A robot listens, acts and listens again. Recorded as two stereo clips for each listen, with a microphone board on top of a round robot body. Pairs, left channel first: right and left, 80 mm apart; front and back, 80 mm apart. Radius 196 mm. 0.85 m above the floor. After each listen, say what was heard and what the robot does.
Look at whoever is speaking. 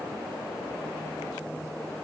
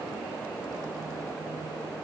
Keep listening.
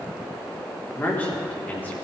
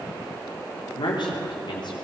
The man speaking: 20° right. Turn 20° right.
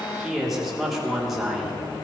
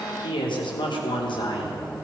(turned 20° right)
Facing the man speaking.